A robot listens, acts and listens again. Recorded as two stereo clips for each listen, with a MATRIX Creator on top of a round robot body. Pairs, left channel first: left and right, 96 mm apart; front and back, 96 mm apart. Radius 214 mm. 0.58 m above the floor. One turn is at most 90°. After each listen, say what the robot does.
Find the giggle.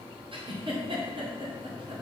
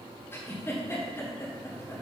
Turn 65° right.
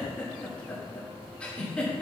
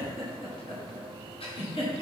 Turn 10° left.
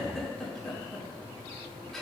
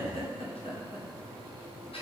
Facing the giggle, 1 to 2 m away.